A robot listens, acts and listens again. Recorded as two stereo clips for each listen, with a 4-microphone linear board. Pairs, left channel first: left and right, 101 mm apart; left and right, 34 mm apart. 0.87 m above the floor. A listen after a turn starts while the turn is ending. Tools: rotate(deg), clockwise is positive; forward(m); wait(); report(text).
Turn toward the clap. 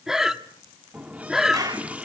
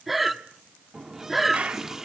rotate(40)
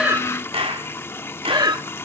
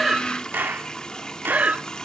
rotate(100)
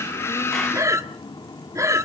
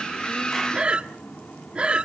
wait()
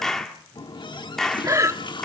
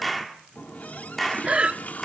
report("Facing the clap, 2 to 4 m away.")